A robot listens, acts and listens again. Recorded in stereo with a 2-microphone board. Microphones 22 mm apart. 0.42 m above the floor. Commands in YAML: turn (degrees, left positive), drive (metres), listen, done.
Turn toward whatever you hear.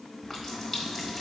turn: 30
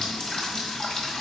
turn: 145
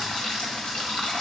turn: 45
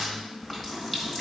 turn: 10
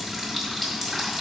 done: "Found it: a running tap, straight ahead, 1 to 2 m away."